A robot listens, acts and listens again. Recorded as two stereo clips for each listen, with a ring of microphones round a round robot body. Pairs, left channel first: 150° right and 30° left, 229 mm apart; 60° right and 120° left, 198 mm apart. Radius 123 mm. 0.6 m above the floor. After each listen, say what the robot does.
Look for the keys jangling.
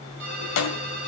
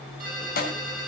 Turn 115° right.
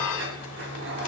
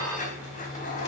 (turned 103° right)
Turn 10° right.
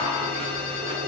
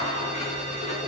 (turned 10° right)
Facing the keys jangling.